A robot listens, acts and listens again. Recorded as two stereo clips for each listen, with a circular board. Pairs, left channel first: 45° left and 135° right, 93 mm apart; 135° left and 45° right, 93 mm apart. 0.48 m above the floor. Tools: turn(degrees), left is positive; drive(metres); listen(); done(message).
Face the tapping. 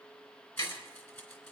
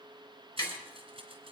turn(degrees=85)
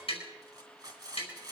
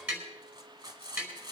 turn(degrees=30)
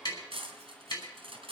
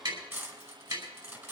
done("Found it: tapping, straight ahead.")